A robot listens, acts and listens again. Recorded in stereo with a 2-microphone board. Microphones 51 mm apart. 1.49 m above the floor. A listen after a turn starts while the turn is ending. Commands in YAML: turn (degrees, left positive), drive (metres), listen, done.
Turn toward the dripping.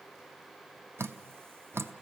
turn: -60
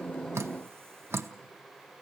turn: -60
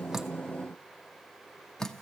turn: 10
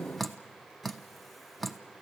done: "Facing the dripping, under 1 m away."